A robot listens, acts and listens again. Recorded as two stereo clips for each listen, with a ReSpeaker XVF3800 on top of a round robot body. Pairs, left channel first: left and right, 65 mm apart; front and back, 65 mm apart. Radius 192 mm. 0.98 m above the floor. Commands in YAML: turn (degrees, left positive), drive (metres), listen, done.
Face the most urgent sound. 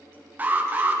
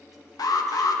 turn: -25
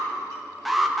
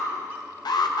done: "Facing the alarm, 1 to 2 m away."